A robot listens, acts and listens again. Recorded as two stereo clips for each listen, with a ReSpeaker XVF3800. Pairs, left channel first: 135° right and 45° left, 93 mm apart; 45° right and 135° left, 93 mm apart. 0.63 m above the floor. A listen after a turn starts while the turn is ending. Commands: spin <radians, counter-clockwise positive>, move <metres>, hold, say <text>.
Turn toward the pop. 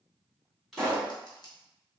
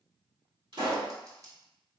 spin 2.36
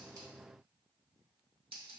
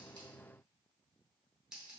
say Facing where the pop came from. I can't hear it now.